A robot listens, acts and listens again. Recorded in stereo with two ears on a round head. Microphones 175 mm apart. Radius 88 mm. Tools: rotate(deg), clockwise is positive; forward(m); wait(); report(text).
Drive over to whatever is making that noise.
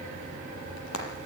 rotate(-90)
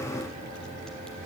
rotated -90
wait()
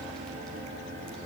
wait()
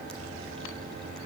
report("Facing where the frying came from. I can't hear it now. I did not reach it.")